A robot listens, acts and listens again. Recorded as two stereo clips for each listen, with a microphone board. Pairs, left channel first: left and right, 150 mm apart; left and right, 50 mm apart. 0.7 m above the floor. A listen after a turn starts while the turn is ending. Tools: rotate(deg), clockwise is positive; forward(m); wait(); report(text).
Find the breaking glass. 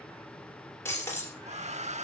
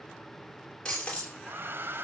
rotate(-15)
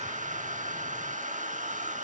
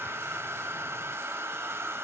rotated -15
wait()
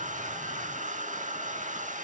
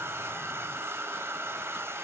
report("I heard breaking glass, but can't make it out now. It was about straight ahead or 150° left.")